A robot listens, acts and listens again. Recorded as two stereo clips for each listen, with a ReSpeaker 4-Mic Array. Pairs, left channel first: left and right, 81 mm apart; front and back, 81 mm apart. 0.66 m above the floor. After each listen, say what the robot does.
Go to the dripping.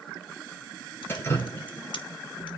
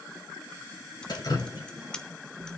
Turn 30° left.
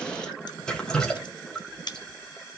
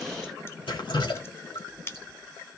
Turn 10° left.
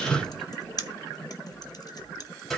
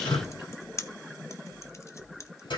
Drive 1.0 m forward.
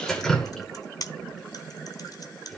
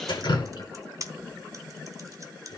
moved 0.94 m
Drive 1.0 m forward.
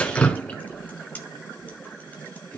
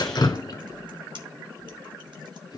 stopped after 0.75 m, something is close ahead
Turn 15° left.
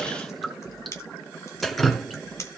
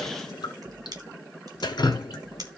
Arrived at the dripping, straight ahead.